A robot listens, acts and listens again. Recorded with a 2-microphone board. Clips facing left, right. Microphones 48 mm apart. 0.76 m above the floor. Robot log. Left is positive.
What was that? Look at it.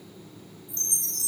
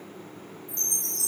note: The chime: about 50° left or 130° left.
cmd yaw +50
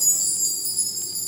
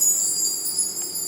note: So it is at 10° left.
cmd yaw +10
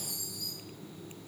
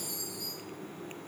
end: Found it: a chime, straight ahead.